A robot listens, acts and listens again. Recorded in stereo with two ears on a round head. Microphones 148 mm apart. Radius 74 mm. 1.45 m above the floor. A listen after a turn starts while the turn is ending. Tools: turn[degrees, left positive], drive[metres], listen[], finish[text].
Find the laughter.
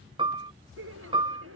Action: turn[-90]
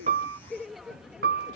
Action: finish[Found it: laughter, straight ahead.]